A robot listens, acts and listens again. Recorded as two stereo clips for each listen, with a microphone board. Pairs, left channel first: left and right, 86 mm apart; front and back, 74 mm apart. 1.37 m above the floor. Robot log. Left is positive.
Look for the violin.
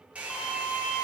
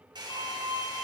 end: Found it: a violin, straight ahead.